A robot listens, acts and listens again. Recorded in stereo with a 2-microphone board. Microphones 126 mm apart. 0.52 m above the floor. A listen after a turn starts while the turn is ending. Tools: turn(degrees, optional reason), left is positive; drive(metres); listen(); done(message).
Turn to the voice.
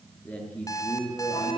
turn(degrees=30)
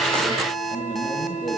turn(degrees=145, reason="So it is at 145° left.")
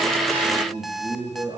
turn(degrees=-35, reason="The man speaking is now 35° right.")
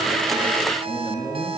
turn(degrees=10, reason="The man speaking is now 10° left.")
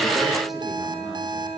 listen()
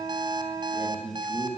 done("Found it: a man speaking, straight ahead.")